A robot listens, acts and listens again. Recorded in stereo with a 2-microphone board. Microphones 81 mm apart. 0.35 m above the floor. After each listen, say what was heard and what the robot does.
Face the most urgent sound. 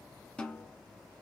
Keep listening.
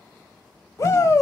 The shout: about 40° left or 140° left. Turn 40° left.
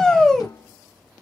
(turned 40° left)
So it is at 10° left. Turn 10° left.
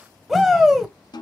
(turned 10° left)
Found it: a shout, straight ahead, 1 to 2 m away.